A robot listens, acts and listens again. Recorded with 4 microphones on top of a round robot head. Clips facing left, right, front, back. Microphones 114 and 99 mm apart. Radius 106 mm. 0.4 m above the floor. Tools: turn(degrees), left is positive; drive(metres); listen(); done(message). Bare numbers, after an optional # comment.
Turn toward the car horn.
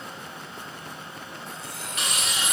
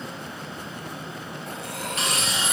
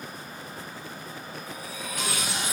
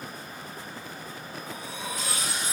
listen()
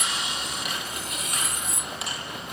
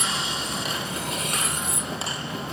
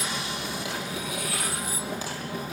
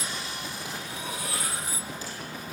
listen()
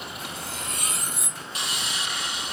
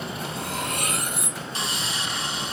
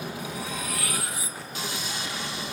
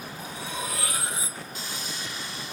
done("I can't make out a car horn to turn to.")